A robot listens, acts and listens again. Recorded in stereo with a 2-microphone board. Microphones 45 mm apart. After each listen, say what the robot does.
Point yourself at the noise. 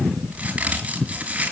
Turn 25° right.
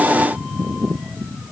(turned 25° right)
Keep listening.
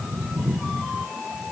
I heard a crack, but can't make it out now. It was about straight ahead or 130° right.